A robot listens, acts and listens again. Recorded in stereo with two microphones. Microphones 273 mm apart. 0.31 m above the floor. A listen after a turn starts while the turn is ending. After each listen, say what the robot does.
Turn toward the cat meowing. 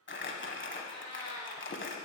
Turn 75° right.
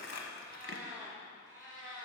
Turn 50° right.
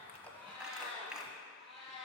Found it: a cat meowing, straight ahead, 2 to 4 m away.